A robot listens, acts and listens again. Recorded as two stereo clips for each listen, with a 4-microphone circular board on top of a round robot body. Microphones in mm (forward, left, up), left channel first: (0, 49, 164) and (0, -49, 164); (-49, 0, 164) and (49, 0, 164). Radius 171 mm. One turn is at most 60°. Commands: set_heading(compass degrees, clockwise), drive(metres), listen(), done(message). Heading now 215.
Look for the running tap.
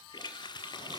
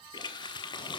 set_heading(155)
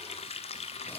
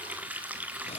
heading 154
set_heading(94)
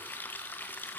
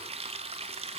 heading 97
set_heading(77)
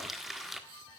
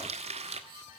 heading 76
done("Facing the running tap, 1 to 2 m away.")